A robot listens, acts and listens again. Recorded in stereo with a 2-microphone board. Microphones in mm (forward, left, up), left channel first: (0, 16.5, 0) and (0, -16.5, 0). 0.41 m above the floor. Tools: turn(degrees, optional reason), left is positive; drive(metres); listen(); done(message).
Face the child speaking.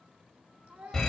turn(degrees=-65, reason="The child speaking: about 65° right or 115° right.")
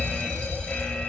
listen()
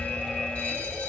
listen()
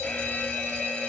done("I heard a child speaking, but can't make it out now. It was about straight ahead or 50° right.")